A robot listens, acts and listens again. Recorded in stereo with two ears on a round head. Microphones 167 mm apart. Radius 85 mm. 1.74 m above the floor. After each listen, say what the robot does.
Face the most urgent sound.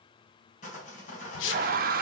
Turn 50° right.
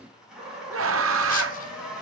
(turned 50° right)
Turn 80° right.
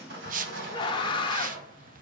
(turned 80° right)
Turn 25° left.
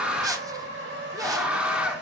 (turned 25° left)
Found it: a scream, straight ahead, 1 to 2 m away.